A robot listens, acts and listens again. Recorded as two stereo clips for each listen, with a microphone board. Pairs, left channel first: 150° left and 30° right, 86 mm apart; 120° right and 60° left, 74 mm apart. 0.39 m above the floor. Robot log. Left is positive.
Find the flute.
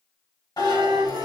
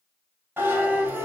note: The flute: 30° right.
cmd yaw -30
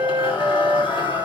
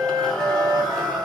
note: The flute is now 15° left.
cmd yaw +15
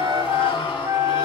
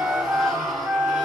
end: Found it: a flute, straight ahead.